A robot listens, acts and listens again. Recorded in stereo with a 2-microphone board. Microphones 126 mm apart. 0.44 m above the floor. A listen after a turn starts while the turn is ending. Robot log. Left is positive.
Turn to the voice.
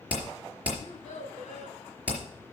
cmd yaw +90
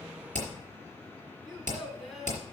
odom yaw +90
end: Facing the child speaking.